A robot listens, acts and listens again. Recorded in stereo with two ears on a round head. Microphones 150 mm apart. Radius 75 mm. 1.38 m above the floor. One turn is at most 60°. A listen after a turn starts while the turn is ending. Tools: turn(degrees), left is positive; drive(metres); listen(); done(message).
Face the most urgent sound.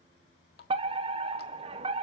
turn(degrees=-35)
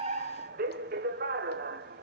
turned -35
turn(degrees=-60)
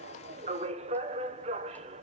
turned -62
turn(degrees=-45)
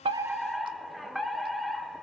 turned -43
done("Facing the fire alarm.")